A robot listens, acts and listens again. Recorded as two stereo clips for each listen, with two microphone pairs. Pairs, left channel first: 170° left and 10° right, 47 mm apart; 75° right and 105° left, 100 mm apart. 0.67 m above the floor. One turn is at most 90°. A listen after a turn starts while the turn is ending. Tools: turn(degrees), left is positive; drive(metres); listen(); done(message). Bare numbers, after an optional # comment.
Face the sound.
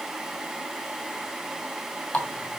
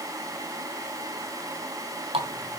# The running tap: 110° left.
turn(90)
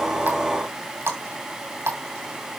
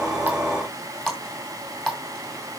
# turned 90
# The running tap is now 10° left.
turn(10)
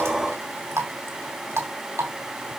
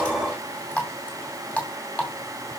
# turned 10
done("Facing the running tap, 2 to 4 m away.")